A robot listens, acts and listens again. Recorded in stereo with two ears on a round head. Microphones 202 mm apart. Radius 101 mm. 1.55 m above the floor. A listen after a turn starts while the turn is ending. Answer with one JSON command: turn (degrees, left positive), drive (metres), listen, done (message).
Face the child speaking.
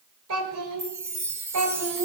{"turn": -90}
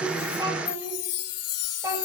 {"turn": -15}
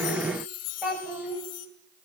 {"turn": -10}
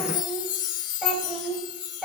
{"done": "Found it: a child speaking, straight ahead."}